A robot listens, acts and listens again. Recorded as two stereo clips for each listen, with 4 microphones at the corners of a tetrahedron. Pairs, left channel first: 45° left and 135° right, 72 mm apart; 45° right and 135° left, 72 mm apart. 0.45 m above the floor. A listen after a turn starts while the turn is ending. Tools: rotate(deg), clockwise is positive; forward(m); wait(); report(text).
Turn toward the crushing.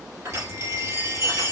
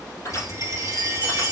rotate(85)
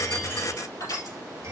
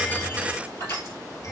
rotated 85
rotate(-10)
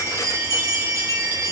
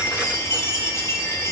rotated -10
wait()
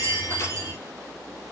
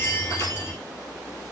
wait()
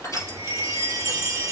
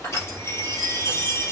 report("Facing the crushing.")